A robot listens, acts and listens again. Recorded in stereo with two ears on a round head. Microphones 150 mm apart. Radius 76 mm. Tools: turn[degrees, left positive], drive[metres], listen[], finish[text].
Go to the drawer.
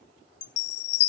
Action: listen[]
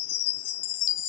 Action: listen[]
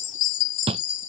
Thought: The drawer: about 35° right or 145° right.
Action: turn[-35]
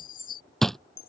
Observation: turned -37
Action: drive[1.0]
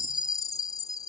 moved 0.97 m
Action: listen[]
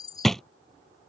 Action: drive[1.0]
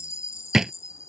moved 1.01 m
Action: drive[1.0]
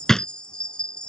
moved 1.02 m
Action: drive[1.0]
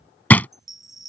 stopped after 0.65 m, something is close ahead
Thought: The drawer is now 10° left.
Action: turn[10]
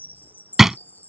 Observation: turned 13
Action: finish[I am next to the drawer.]